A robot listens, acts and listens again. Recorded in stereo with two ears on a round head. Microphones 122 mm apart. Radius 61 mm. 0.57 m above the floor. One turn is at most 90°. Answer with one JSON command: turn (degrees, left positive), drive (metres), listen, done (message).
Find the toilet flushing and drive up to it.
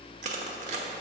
{"listen": true}
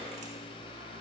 {"listen": true}
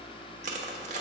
{"done": "I can't make out a toilet flushing to turn to."}